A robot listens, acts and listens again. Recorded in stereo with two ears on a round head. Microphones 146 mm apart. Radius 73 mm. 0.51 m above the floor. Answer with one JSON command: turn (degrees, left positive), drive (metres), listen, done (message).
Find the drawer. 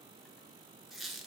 {"listen": true}
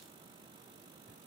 {"listen": true}
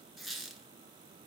{"done": "I can't make out a drawer to turn to."}